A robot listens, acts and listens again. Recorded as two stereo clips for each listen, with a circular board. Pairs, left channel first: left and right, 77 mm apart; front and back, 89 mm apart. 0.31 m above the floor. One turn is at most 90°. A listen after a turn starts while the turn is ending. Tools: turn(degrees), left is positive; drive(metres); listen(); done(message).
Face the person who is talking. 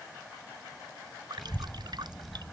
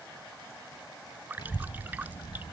done("Found it: a child speaking, straight ahead.")